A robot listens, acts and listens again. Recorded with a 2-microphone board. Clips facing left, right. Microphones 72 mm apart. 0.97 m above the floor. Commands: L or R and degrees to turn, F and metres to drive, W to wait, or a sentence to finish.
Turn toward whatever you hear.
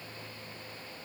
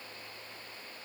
W
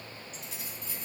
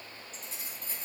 R30
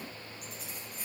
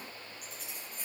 Facing the keys jangling, over 4 m away.